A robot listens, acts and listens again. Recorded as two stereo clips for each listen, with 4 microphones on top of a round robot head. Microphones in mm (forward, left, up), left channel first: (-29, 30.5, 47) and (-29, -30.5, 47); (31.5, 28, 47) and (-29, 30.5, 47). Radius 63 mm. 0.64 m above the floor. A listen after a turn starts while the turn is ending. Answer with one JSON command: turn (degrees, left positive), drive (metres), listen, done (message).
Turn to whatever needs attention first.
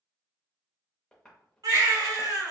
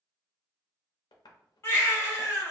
{"turn": -55}
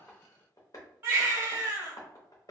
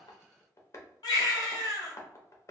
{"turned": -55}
{"turn": -25}
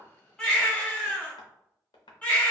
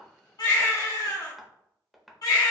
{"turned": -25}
{"turn": 20}
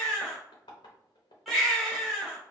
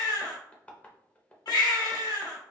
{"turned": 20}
{"done": "Found it: a baby crying, straight ahead, 1 to 2 m away."}